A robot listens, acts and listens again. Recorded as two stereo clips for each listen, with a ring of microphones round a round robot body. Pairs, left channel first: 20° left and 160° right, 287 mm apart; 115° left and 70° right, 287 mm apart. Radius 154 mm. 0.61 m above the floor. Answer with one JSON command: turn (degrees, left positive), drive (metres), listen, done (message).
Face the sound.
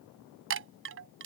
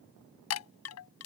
{"turn": 155}
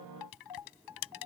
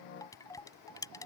{"turn": 35}
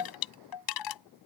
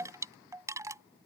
{"turn": 15}
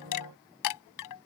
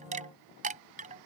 {"done": "Found it: a chime, straight ahead."}